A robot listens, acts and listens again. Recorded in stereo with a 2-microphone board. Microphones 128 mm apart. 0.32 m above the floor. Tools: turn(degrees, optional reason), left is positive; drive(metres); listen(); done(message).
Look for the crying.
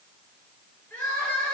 turn(degrees=30)
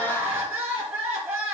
turn(degrees=-15, reason="So it is at 15° right.")
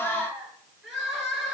done("Facing the crying.")